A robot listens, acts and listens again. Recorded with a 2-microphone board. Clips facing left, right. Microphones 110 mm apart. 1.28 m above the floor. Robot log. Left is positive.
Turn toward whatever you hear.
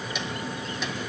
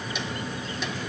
cmd idle
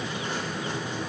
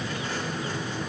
cmd idle
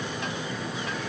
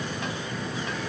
end: I can't make out anything.